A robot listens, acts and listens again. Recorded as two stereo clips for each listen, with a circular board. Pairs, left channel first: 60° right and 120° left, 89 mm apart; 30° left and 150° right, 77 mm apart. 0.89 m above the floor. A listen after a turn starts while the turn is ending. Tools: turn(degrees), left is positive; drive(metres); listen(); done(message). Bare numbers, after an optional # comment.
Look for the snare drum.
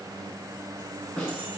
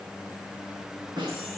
# The snare drum: 140° right.
turn(-140)
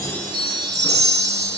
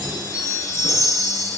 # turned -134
listen()
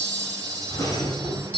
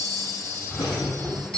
listen()
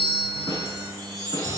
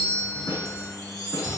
done("I heard a snare drum from this way, but can't make it out now.")